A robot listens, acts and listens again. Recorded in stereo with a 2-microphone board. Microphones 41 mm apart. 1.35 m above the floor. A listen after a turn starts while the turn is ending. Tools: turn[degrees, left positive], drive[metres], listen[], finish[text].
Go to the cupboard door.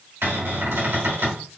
Thought: The cupboard door: about 75° right or 105° right.
Action: turn[-75]
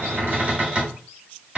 Thought: So it is at 20° right.
Action: turn[-20]
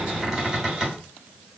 Thought: The cupboard door is now 10° right.
Action: turn[-10]
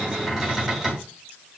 Action: drive[1.0]
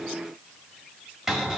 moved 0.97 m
Action: drive[1.0]
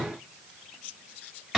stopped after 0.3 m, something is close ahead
Action: finish[Arrived at the cupboard door, straight ahead.]